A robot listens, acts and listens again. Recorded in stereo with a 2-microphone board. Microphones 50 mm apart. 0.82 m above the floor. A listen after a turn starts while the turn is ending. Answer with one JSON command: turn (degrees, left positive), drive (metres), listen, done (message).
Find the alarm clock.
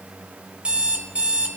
{"turn": -25}
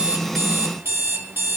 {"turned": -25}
{"turn": -125}
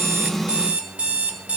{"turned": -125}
{"turn": -30}
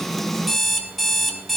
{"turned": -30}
{"done": "Found it: an alarm clock, straight ahead, 1 to 2 m away."}